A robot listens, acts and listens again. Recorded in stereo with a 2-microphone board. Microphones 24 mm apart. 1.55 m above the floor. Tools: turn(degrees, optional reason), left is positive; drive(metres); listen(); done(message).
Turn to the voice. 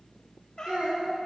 turn(degrees=-90)
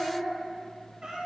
turn(degrees=10, reason="So it is at 10° left.")
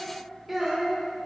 done("Found it: a child speaking, straight ahead, 2 to 4 m away.")